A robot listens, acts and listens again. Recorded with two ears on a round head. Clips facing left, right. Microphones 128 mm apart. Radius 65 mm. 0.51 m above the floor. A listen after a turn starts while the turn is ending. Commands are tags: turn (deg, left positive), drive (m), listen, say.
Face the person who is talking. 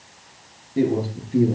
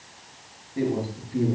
<turn deg="35"/>
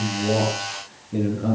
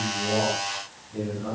<turn deg="110"/>
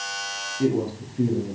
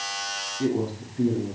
<turn deg="15"/>
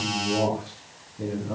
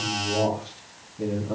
<say>Found it: a man speaking, straight ahead.</say>